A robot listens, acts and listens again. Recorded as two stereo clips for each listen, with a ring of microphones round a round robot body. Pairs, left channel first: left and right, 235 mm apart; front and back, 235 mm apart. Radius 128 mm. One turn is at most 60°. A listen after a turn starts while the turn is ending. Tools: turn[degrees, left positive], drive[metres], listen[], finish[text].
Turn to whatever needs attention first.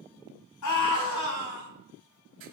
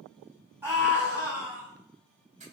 Thought: The scream: 100° left.
Action: turn[60]
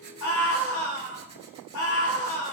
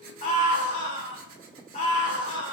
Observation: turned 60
Thought: The scream is now 65° left.
Action: turn[60]
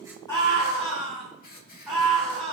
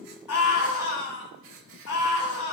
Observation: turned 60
Action: finish[Found it: a scream, straight ahead, over 4 m away.]